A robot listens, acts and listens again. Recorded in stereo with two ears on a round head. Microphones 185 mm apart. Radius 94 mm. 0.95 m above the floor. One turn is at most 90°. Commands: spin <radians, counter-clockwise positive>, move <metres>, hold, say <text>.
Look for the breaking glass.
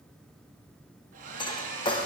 spin 0.35
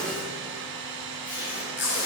say Facing the breaking glass, 1 to 2 m away.